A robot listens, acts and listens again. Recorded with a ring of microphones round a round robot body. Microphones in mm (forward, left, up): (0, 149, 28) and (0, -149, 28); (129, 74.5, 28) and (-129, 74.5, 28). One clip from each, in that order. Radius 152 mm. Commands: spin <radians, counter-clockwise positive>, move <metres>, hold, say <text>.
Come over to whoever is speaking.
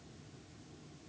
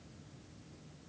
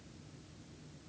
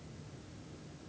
hold
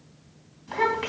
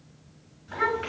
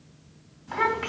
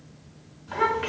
spin 0.96
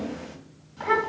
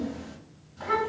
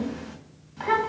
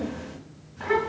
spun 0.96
spin 0.35
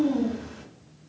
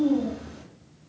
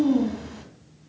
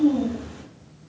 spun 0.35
move 1.0
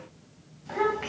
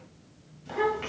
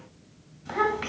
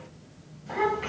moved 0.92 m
spin -0.17
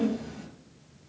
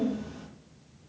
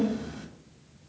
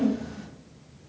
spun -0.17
move 1.0
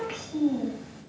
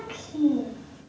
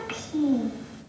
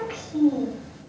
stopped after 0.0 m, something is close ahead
say Arrived at the child speaking, straight ahead.